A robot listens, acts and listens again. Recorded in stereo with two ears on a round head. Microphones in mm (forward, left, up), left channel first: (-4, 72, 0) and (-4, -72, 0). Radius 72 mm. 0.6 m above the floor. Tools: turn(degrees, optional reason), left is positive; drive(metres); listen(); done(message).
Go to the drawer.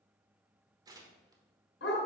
listen()
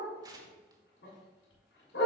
listen()
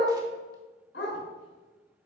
done("I can't make out a drawer to turn to.")